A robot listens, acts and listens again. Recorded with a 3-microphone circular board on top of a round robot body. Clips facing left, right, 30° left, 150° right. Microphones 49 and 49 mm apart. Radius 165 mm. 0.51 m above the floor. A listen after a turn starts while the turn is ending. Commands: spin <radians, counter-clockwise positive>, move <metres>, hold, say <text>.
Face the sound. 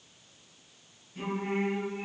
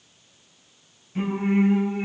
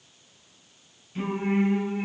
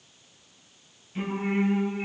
spin -1.05
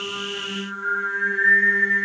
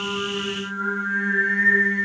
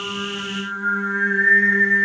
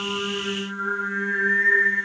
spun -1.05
say Found it: singing, straight ahead.